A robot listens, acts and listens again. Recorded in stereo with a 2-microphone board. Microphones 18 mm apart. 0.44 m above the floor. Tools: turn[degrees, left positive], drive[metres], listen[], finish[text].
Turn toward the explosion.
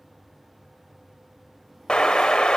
Thought: The explosion: about 60° left or 120° left.
Action: turn[60]
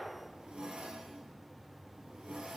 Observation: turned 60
Action: listen[]
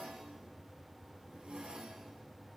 Action: finish[I heard an explosion, but can't make it out now. It was about straight ahead or 60° left.]